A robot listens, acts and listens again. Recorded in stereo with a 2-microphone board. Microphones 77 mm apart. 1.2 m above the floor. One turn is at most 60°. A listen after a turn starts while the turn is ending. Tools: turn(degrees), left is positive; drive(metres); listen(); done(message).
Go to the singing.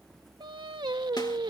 turn(degrees=-60)
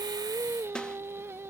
turn(degrees=-35)
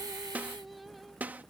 listen()
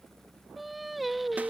drive(metres=1.0)
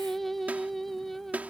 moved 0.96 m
drive(metres=1.0)
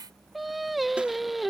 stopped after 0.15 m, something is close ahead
done("I am next to the singing.")